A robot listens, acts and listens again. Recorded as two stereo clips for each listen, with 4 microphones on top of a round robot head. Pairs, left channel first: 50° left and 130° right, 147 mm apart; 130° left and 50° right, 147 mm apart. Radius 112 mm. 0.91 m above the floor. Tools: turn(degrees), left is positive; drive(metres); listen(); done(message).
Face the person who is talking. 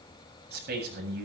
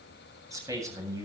turn(degrees=-120)
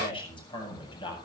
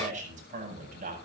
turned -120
turn(degrees=-10)
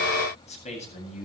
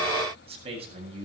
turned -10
done("Facing the man speaking.")